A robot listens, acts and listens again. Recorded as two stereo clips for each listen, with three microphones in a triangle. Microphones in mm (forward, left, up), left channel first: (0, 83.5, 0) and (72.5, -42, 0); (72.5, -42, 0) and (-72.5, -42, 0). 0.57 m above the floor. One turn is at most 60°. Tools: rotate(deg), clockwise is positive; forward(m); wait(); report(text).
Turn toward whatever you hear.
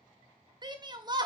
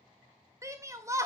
rotate(60)
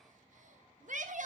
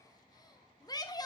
rotate(60)
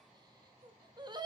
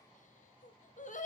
report("Facing the shout, 1 to 2 m away.")